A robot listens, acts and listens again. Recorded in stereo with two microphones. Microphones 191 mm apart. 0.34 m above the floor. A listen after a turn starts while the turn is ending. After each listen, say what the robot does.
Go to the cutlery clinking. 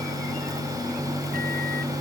Keep listening.
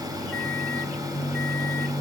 Keep listening.
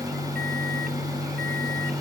I can't make out cutlery clinking.